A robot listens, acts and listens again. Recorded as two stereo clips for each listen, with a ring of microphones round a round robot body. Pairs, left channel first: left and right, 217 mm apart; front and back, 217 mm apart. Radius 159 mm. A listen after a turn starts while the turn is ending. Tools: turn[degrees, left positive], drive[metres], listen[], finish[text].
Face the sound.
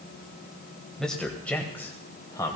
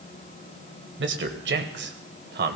Thought: The man speaking: 160° left.
Action: turn[160]
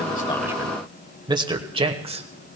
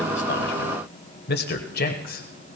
Thought: The man speaking is now 35° right.
Action: turn[-35]
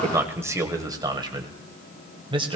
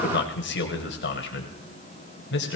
Thought: The man speaking is now 25° right.
Action: turn[-25]
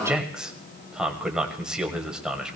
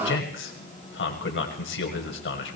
Action: finish[Facing the man speaking, 1 to 2 m away.]